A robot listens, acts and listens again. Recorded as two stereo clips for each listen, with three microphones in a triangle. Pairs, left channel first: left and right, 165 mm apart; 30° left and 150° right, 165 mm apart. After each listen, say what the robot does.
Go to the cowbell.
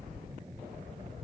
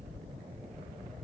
Keep listening.
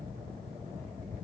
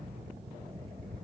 Keep listening.
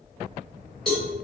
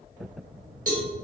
Turn 175° left.
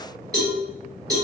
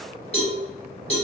Turn 20° right.
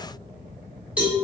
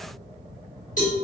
Drive 1.0 m forward.
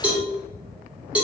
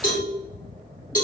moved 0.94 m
Turn 10° right.
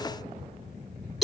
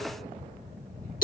Drive 1.0 m forward.
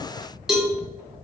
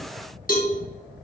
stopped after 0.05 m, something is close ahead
Arrived at the cowbell, straight ahead.